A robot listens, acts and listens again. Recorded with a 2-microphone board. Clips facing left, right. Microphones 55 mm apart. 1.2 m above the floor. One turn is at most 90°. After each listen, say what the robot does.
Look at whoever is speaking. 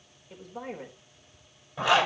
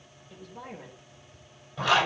Turn 40° left.
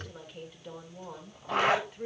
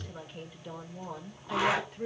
Found it: a woman speaking, straight ahead.